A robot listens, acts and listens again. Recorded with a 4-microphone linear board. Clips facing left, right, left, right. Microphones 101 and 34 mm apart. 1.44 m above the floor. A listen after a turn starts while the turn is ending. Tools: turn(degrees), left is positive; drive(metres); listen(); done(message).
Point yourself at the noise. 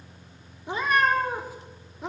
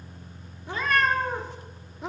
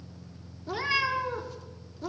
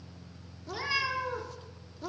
turn(degrees=30)
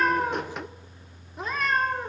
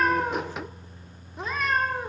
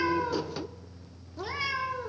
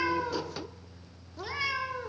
turn(degrees=-30)
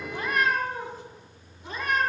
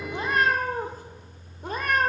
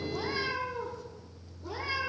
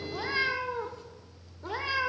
turn(degrees=-125)
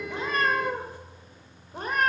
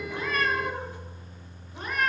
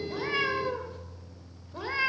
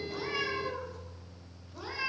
turn(degrees=45)
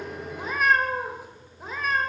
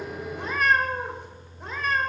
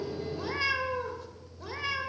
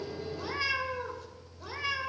done("Found it: a cat meowing, straight ahead, 2 to 4 m away.")